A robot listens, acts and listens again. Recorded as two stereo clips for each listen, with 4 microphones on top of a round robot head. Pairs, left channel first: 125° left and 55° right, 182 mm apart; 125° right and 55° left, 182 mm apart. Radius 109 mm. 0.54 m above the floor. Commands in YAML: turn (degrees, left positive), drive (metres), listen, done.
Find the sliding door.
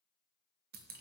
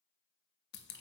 listen: true
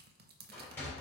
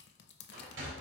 turn: 45
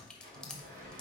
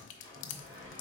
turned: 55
turn: -10
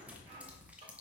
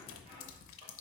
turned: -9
done: "Found it: a sliding door, straight ahead."